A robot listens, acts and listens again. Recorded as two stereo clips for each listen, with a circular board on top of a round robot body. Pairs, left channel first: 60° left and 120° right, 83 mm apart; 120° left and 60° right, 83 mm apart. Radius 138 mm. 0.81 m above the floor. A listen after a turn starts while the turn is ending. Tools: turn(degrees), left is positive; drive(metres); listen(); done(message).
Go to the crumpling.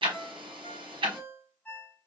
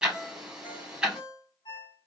listen()
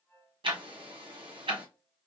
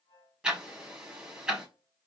listen()
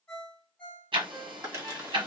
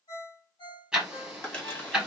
turn(degrees=-175)
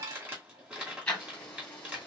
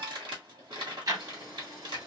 turn(degrees=-45)
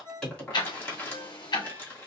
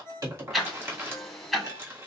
drive(metres=1.0)
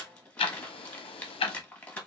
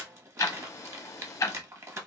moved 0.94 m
turn(degrees=-10)
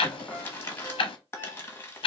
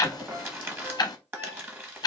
drive(metres=1.0)
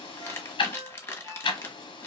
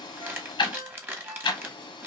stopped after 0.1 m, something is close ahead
done("I am next to the crumpling.")